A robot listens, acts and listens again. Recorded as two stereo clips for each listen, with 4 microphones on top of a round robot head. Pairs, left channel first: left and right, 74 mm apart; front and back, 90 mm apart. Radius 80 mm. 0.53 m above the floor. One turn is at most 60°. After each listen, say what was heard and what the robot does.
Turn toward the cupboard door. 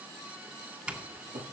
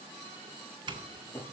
The cupboard door: 85° right. Turn 60° right.
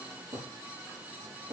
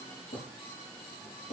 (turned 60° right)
The cupboard door is now 25° right. Turn 25° right.
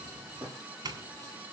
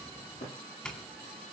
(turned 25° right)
Found it: a cupboard door, straight ahead, over 4 m away.